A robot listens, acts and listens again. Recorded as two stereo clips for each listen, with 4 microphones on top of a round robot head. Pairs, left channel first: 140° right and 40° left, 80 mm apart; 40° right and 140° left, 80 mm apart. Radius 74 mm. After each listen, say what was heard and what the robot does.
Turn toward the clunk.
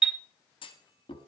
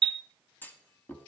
The clunk: 110° right. Turn 110° right.
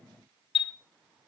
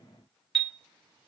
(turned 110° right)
I heard a clunk from this way, but can't make it out now.